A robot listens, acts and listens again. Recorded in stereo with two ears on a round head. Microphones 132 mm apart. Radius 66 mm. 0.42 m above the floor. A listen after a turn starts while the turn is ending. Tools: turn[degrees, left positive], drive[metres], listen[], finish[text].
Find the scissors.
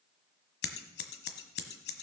Action: turn[90]
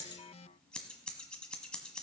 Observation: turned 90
Action: finish[Facing the scissors, 1 to 2 m away.]